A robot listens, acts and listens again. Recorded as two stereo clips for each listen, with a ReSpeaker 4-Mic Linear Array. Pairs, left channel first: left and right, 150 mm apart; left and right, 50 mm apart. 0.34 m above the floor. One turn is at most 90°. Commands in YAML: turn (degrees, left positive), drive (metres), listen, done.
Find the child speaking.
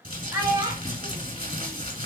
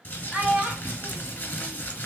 turn: -25
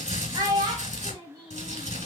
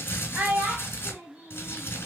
turn: -30
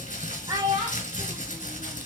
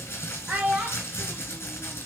turn: -25
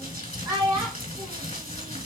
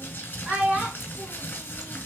turn: -30
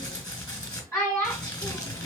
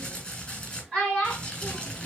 turn: 15
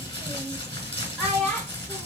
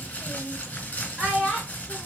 done: "Facing the child speaking."